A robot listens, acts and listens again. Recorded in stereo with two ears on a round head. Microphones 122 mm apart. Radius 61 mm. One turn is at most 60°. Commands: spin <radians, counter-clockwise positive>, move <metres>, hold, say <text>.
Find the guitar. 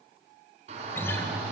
spin 0.35
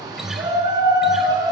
say Facing the guitar, 1 to 2 m away.